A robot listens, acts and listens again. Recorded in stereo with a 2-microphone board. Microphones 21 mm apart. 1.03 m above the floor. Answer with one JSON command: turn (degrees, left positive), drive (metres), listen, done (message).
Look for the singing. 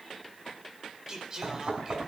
{"turn": -30}
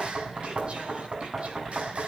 {"listen": true}
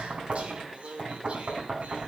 {"turn": -105}
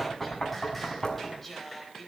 {"done": "Facing the singing."}